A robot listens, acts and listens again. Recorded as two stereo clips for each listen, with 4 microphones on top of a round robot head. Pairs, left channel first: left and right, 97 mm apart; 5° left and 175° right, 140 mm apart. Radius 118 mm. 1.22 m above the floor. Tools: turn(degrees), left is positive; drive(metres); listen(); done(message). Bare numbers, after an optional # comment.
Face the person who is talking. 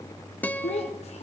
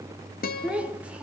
# The child speaking: 100° left.
turn(100)
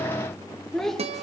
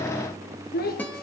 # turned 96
done("Facing the child speaking, 2 to 4 m away.")